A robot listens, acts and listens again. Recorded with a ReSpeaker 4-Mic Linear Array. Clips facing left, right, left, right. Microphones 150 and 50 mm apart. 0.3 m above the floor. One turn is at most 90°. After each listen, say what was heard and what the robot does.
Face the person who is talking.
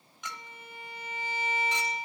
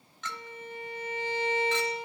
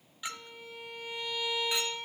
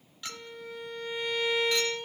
Keep listening.
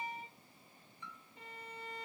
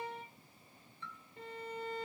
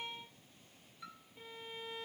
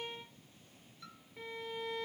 Keep listening.
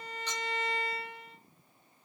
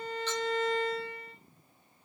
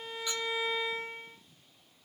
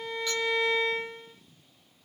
I can't make out anyone speaking to turn to.